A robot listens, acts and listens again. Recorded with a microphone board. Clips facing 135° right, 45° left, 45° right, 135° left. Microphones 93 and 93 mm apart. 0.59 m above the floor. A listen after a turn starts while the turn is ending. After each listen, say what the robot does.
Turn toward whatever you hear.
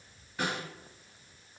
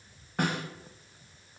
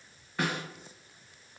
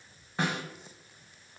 Turn 70° left.
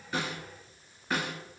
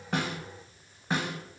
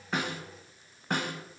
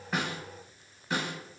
Turn 20° right.
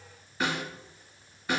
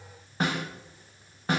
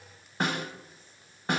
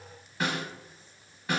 Facing the snare drum, under 1 m away.